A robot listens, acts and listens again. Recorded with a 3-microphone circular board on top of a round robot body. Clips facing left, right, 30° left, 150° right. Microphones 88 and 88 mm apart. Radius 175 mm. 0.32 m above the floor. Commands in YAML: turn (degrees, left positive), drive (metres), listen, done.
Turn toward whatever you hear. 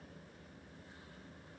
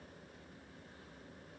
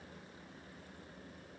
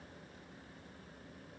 listen: true
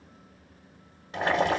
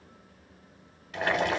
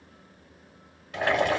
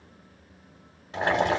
turn: 150
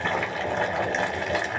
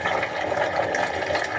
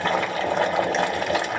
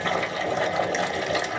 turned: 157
turn: -10
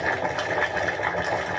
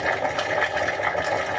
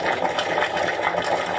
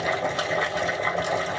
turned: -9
done: "Found it: boiling, straight ahead, 2 to 4 m away."